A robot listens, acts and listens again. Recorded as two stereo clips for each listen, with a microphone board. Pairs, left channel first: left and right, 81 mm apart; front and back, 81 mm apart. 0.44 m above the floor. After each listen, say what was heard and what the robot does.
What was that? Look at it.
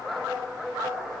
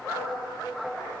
Keep listening.
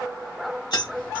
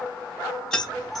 The keys jangling: 80° left. Turn 80° left.
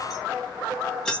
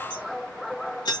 The keys jangling is now 15° left. Turn 15° left.
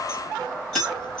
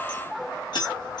The keys jangling is now 10° left. Turn 10° left.
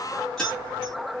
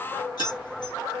The keys jangling is now 10° left. Turn 10° left.
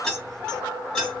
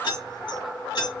The keys jangling is now 10° left. Turn 10° left.
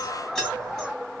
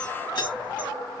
Facing the keys jangling, 2 to 4 m away.